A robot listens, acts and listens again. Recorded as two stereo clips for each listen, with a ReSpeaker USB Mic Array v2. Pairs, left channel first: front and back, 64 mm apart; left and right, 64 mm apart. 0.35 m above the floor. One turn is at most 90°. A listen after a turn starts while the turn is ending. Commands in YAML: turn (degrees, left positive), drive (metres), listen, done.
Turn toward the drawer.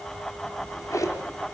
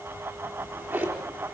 turn: -35
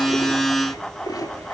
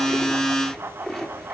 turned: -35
done: "Facing the drawer."